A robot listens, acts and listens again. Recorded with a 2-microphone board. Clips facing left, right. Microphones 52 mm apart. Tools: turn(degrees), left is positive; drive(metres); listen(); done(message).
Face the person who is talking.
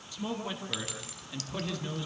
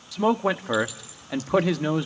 turn(degrees=-90)
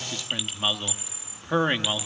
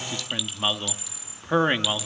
done("Found it: a man speaking, straight ahead, 1 to 2 m away.")